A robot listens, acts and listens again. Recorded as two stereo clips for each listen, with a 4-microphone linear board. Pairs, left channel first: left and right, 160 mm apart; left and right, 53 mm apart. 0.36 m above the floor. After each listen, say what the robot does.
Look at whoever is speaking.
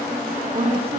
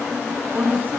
Turn 40° right.
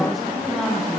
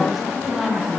Facing the woman speaking.